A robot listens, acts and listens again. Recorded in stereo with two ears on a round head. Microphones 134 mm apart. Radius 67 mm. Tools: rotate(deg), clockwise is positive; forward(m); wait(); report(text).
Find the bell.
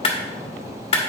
wait()
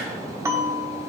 rotate(20)
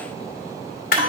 rotate(135)
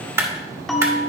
report("Found it: a bell, straight ahead.")